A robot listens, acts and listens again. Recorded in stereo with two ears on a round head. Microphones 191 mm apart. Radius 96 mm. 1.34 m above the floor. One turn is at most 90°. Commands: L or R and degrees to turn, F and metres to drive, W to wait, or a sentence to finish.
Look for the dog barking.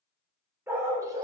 R20
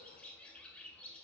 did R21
W
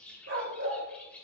R90
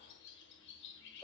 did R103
R10
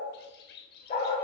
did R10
L30
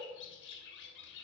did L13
L20
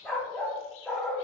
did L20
Facing the dog barking.